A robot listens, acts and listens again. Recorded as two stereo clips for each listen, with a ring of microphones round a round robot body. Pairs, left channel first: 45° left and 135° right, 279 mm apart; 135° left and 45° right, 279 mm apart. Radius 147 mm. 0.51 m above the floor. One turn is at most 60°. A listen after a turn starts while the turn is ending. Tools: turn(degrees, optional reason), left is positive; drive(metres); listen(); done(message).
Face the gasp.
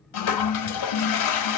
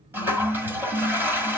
listen()
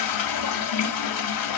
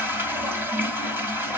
listen()
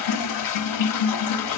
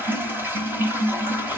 done("I can't make out a gasp, only a toilet flushing.")